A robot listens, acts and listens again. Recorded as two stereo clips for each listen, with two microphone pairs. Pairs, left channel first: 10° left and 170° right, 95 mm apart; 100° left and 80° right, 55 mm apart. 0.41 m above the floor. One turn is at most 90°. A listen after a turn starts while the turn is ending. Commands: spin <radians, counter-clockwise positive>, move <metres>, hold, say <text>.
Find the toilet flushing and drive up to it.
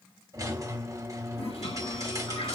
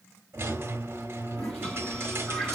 spin 0.17
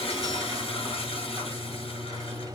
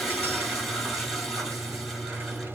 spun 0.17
move 1.0
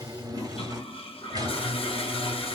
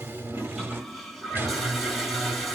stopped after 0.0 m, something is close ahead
say Blocked. The toilet flushing is further on, straight ahead.